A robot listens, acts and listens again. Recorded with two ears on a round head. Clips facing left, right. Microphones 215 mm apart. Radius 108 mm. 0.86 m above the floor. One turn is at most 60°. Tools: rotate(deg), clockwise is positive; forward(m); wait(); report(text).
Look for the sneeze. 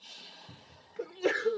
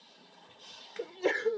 rotate(-30)
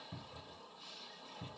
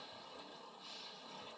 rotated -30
wait()
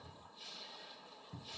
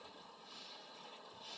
report("I heard a sneeze, but can't make it out now. It was about 20° right or 140° left.")